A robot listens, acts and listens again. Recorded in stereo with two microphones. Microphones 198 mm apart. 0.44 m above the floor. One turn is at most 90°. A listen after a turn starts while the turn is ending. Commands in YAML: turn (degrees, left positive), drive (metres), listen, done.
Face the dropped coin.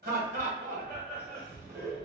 listen: true
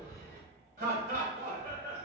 listen: true
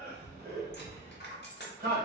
turn: 60
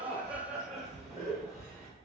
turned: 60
listen: true
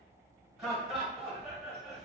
done: "I heard a dropped coin, but can't make it out now. It was about straight ahead or 60° left."